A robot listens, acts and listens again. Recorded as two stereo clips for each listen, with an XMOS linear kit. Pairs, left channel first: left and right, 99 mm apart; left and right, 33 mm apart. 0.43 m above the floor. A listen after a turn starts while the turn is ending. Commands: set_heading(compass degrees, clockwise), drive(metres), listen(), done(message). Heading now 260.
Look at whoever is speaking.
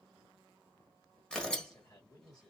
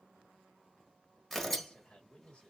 set_heading(220)
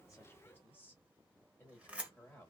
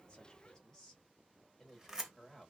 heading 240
set_heading(215)
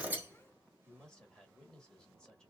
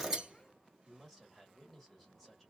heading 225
set_heading(215)
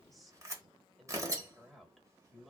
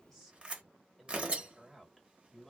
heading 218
done("Found it: a man speaking, straight ahead.")